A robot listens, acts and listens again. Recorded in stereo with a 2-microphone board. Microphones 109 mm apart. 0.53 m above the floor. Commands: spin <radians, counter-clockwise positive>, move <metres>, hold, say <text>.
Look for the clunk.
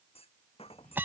spin 1.13
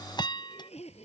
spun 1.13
hold
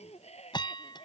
say I heard a clunk, but can't make it out now. It was about straight ahead or 50° left.